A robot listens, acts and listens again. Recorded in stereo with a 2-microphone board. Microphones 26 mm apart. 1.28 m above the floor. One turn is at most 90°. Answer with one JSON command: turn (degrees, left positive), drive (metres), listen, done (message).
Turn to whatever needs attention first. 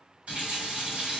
{"listen": true}
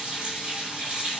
{"listen": true}
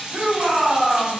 {"turn": -90}
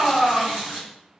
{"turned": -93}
{"turn": 15}
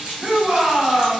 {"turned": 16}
{"done": "Facing the shout, 1 to 2 m away."}